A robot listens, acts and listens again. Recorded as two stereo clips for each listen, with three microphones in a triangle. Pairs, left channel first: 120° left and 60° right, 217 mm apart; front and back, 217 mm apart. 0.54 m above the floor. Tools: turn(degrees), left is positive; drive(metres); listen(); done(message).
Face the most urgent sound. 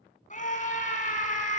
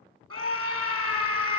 turn(degrees=175)
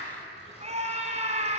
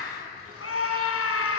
done("Facing the scream.")